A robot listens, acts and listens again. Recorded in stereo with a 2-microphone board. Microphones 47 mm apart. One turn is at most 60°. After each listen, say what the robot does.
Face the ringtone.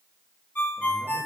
Turn 40° left.
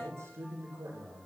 Keep listening.
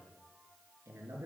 Keep listening.
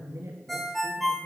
Found it: a ringtone, straight ahead.